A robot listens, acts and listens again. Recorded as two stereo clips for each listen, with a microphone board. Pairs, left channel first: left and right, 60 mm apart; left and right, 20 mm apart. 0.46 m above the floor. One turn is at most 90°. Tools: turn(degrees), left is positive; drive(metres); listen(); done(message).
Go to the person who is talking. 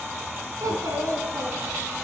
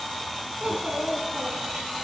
turn(degrees=-70)
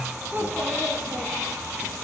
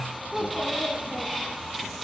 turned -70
turn(degrees=-35)
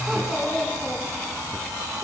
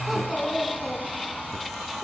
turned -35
drive(metres=1.0)
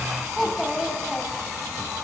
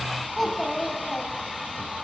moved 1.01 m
drive(metres=1.0)
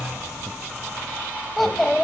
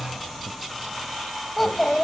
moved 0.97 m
drive(metres=1.0)
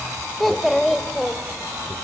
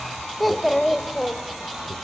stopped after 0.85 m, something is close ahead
done("Arrived at the child speaking, straight ahead.")